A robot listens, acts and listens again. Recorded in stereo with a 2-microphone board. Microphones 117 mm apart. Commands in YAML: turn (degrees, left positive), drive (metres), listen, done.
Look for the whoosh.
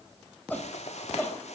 turn: 70
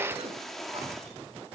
done: "Facing the whoosh."